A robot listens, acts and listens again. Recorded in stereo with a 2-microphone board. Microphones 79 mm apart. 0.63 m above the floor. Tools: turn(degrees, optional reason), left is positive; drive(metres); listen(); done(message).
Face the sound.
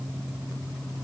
listen()
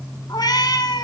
turn(degrees=65, reason="The cat meowing: about 65° left or 115° left.")
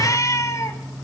turn(degrees=40, reason="So it is at 40° left.")
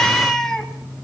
done("Found it: a cat meowing, straight ahead, 2 to 4 m away.")